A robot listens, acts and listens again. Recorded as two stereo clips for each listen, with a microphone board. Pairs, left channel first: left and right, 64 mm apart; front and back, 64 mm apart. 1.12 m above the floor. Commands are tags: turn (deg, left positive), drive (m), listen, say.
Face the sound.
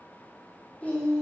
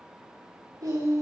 <turn deg="160"/>
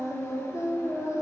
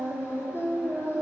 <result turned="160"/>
<turn deg="50"/>
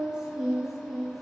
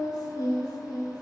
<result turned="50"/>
<say>Found it: singing, straight ahead.</say>